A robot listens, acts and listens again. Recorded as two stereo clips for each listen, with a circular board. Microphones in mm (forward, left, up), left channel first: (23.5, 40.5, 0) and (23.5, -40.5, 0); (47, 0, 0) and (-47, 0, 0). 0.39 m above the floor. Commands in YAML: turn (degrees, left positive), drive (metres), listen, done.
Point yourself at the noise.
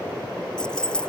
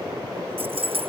turn: 170
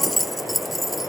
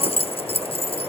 done: "Found it: keys jangling, straight ahead."